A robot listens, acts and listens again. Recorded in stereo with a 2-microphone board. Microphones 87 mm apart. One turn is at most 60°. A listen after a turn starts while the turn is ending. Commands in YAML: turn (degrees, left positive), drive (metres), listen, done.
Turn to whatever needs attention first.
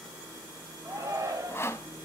turn: -35
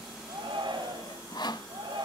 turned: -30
turn: -60
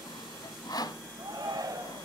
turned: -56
turn: -55
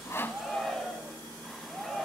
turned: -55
done: "Found it: a shout, straight ahead, 2 to 4 m away."